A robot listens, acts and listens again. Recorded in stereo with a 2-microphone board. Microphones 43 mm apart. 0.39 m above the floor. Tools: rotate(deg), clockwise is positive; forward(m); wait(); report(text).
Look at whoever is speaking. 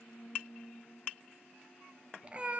wait()
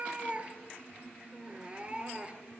wait()
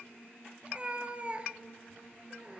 report("I can't make out anyone speaking, only a cat meowing.")